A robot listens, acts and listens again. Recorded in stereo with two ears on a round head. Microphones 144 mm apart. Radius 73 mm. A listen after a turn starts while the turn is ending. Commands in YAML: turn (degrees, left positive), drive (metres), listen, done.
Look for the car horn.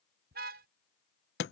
turn: -60
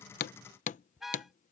done: "Facing the car horn."